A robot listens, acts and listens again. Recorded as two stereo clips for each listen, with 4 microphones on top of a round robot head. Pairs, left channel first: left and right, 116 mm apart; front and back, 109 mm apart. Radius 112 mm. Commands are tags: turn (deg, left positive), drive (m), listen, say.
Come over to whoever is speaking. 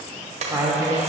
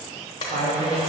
<turn deg="-155"/>
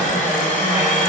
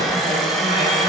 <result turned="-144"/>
<turn deg="-15"/>
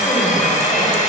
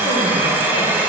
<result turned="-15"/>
<listen/>
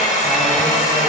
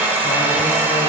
<say>Facing where the woman speaking came from. I can't hear it now. I did not reach it.</say>